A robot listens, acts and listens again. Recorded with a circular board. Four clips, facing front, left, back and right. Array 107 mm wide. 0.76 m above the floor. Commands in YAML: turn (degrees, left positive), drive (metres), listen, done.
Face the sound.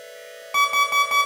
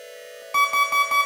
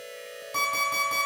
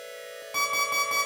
turn: 20
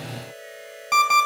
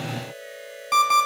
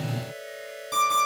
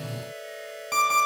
done: "Facing the alarm clock, 2 to 4 m away."